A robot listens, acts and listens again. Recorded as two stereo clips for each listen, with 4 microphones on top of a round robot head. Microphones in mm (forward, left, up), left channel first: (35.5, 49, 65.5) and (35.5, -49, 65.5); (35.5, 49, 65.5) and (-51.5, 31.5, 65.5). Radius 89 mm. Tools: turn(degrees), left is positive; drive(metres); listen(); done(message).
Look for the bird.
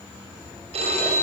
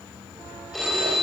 listen()
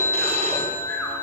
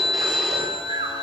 listen()
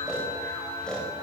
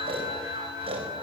done("I can't make out a bird to turn to.")